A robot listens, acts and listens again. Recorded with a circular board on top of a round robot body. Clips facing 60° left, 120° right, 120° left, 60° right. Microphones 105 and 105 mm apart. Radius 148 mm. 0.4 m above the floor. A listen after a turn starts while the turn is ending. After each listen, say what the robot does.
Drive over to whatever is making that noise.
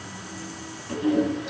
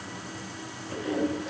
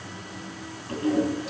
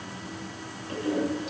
Turn 70° left.
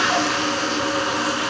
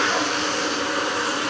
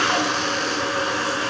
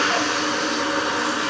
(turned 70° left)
Turn 10° left.
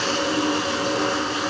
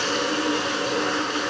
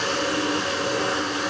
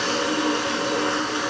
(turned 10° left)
Drive 1.0 m forward.
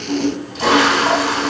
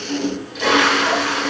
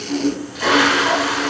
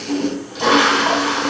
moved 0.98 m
Drive 1.0 m forward.
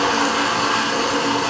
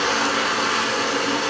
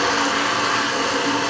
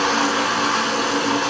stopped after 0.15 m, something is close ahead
Something is in my way. I am facing the toilet flushing but have not reached it.